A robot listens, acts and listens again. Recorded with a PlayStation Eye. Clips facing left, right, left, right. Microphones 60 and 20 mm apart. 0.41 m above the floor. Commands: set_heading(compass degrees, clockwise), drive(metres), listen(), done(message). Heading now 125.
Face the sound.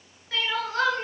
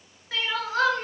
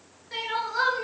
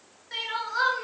set_heading(155)
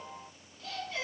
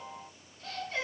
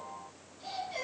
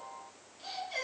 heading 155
set_heading(290)
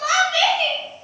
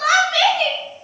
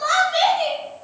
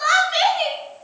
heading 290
set_heading(345)
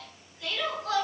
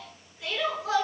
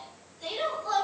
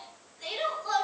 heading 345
set_heading(355)
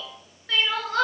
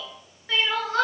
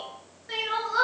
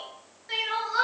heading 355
done("Facing the crying.")